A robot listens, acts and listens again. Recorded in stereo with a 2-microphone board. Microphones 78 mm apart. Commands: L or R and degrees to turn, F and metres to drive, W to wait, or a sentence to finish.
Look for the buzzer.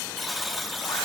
L30
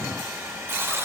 R30
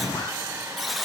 Facing the buzzer.